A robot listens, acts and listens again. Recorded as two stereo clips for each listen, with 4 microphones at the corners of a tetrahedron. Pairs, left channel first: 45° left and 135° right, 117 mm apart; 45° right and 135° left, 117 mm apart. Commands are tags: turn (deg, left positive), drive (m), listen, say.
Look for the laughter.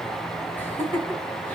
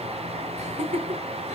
<turn deg="120"/>
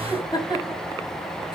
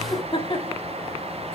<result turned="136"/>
<say>Facing the laughter.</say>